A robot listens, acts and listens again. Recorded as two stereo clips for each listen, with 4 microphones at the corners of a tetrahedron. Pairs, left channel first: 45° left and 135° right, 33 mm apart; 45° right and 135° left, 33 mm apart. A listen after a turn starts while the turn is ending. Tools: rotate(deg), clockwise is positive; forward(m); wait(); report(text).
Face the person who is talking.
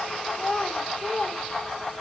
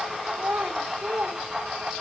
rotate(-110)
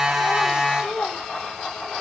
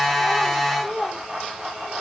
rotate(-15)
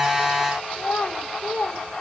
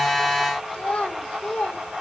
report("Found it: a child speaking, straight ahead.")